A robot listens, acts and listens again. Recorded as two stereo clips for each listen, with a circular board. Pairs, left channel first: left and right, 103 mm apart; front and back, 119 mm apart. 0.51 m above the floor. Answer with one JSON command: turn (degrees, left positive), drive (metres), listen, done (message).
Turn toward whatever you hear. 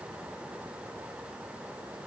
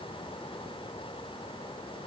{"listen": true}
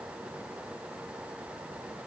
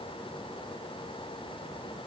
{"listen": true}
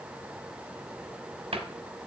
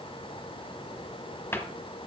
{"turn": -70}
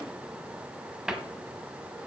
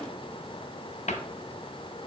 {"done": "Found it: a cupboard door, straight ahead."}